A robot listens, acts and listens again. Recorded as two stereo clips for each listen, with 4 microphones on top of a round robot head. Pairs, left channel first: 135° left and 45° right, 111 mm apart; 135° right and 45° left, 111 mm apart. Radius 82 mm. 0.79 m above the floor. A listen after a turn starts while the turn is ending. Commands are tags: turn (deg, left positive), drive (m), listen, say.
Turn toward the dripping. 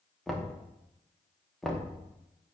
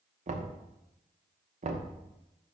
<listen/>
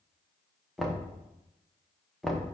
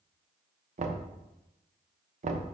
<listen/>
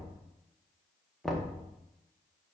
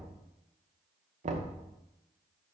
<say>I can't make out dripping to turn to.</say>